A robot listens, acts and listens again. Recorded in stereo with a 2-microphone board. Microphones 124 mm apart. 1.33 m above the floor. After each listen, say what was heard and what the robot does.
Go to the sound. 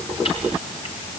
Keep listening.
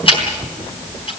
The ticking: about 45° left or 135° left. Turn 45° left.
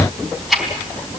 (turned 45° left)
Drive 1.0 m forward.
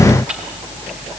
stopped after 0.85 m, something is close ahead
Keep listening.
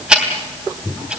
Something is in my way. I am facing the ticking but have not reached it.